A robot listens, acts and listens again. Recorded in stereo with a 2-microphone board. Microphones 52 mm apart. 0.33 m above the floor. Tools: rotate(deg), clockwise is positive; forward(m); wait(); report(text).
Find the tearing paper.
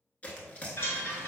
rotate(-30)
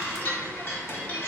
wait()
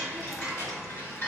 wait()
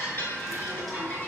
report("I heard tearing paper, but can't make it out now. It was about straight ahead or 120° left.")